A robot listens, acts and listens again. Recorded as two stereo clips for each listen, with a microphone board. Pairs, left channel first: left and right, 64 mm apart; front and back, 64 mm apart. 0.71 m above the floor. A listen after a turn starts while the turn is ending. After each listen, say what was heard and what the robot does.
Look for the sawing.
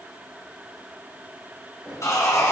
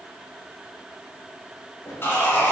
The sawing: 50° left. Turn 50° left.
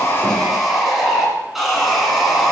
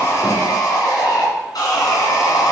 Found it: sawing, straight ahead.